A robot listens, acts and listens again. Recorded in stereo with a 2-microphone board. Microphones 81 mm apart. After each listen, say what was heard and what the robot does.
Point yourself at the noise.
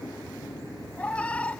The cat meowing: about 15° left or 165° left. Turn 15° left.
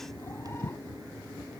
Keep listening.
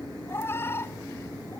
So it is at 150° left. Turn 150° left.
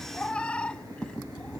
The cat meowing is now 10° left. Turn 10° left.
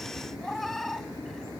Found it: a cat meowing, straight ahead.